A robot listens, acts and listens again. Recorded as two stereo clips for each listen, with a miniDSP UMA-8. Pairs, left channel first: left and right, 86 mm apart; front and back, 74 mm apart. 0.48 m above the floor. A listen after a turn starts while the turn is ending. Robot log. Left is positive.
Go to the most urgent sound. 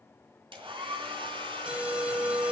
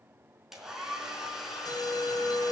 note: The alarm: 15° right.
cmd yaw -15
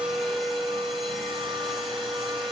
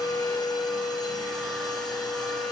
cmd fwd 1.0
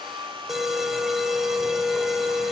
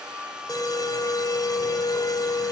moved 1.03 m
cmd fwd 1.0
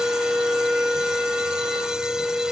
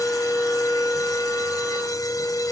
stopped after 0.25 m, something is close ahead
note: The alarm is now 10° right.
cmd yaw -10
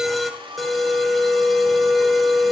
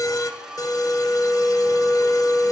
end: I am next to the alarm.